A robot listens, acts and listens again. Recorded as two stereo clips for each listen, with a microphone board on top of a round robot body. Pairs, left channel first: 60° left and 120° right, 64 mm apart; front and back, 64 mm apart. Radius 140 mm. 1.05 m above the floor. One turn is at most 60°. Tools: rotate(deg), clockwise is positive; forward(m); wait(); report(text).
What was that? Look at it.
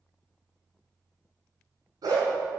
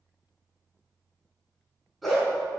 rotate(60)
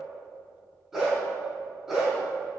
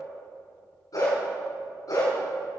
rotate(35)
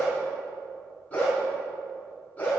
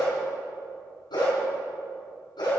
rotate(10)
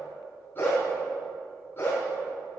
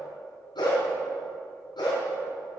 report("Found it: a dog barking, straight ahead.")